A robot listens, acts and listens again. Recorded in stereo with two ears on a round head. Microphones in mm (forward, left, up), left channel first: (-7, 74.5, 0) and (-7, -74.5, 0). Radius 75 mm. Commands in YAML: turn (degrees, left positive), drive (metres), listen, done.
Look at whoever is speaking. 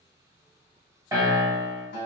listen: true
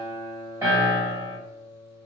listen: true
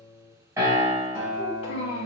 turn: 40
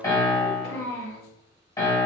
turn: 100
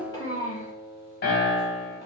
turn: 30
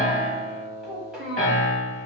done: "Facing the child speaking, 1 to 2 m away."